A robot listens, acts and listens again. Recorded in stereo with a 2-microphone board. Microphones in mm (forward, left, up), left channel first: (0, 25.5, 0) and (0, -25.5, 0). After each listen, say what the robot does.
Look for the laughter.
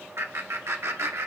Turn 70° right.
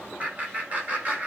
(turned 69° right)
Turn 30° right.
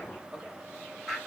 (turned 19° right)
Turn 10° right.
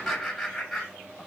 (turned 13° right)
Facing the laughter, over 4 m away.